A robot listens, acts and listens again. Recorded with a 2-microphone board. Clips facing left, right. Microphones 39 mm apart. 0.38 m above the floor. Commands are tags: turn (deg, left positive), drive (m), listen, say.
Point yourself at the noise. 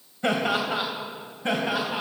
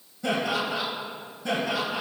<turn deg="40"/>
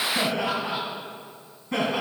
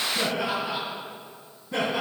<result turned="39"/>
<turn deg="120"/>
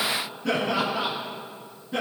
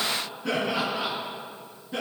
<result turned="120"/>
<say>Found it: laughter, straight ahead.</say>